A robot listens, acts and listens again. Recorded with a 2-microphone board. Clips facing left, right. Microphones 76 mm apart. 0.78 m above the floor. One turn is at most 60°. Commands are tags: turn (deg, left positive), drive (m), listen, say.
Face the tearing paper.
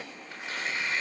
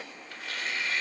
<turn deg="20"/>
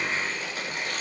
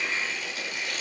<turn deg="60"/>
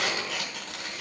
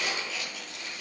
<turn deg="60"/>
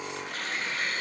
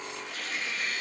<turn deg="55"/>
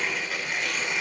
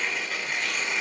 <say>Facing the tearing paper.</say>